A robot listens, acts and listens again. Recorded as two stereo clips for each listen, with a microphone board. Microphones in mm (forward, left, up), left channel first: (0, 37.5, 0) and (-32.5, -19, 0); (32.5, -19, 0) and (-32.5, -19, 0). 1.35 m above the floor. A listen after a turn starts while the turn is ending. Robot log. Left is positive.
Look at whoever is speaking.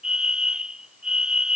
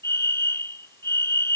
cmd idle
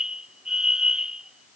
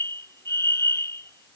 cmd idle
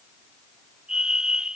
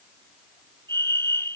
end: I can't make out anyone speaking to turn to.